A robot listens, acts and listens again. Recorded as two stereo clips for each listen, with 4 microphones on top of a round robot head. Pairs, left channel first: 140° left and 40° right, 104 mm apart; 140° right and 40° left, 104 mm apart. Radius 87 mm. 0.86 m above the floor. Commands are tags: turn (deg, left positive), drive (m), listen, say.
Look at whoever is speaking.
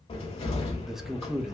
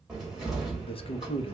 <turn deg="-125"/>
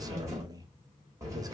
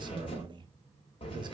<say>Found it: a man speaking, straight ahead.</say>